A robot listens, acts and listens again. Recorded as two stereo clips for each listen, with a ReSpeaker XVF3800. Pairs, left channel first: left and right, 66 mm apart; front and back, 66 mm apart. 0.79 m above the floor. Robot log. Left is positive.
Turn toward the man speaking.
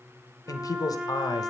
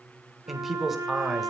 note: The man speaking: 95° left.
cmd yaw +95
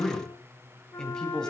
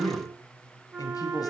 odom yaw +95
note: The man speaking is now 10° left.
cmd yaw +10
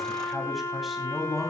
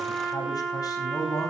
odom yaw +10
end: Found it: a man speaking, straight ahead.